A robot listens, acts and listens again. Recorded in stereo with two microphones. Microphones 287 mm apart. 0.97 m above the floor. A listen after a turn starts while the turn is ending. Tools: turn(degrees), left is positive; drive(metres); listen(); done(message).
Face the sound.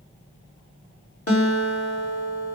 turn(degrees=50)
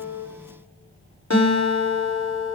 turn(degrees=75)
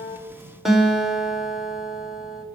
done("Facing the guitar, 2 to 4 m away.")